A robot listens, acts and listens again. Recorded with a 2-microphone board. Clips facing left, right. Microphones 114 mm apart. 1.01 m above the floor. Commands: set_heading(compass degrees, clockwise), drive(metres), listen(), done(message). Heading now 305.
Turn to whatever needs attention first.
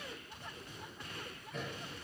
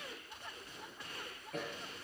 listen()
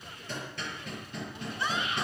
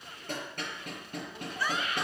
set_heading(280)
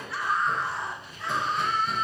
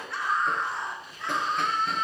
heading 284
done("Found it: a scream, straight ahead.")